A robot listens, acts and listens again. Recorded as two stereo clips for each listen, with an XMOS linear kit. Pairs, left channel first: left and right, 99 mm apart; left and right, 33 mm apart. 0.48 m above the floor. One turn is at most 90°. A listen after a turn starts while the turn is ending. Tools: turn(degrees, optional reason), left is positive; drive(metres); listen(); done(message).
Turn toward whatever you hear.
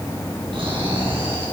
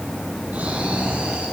turn(degrees=-60, reason="The snoring: about 60° right or 120° right.")
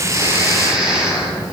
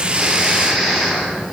done("Facing the snoring, over 4 m away.")